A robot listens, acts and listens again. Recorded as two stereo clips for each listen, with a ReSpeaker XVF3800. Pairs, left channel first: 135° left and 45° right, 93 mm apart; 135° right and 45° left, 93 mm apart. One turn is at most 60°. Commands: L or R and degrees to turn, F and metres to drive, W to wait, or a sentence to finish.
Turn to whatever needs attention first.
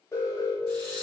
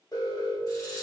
R60
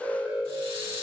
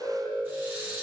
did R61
R60
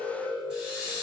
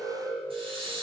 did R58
R50
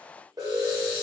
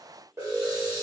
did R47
Facing the alarm.